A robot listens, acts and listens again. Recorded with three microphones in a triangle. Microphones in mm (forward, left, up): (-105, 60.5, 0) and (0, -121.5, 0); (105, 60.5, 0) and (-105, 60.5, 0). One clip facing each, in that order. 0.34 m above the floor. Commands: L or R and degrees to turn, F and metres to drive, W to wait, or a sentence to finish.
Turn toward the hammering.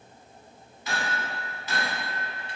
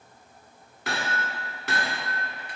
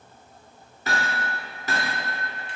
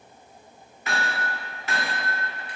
R45
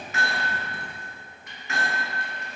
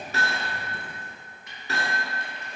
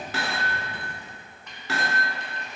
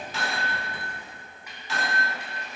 R10
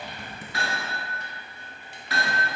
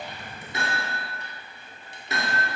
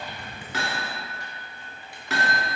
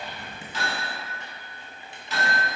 Found it: hammering, straight ahead, 1 to 2 m away.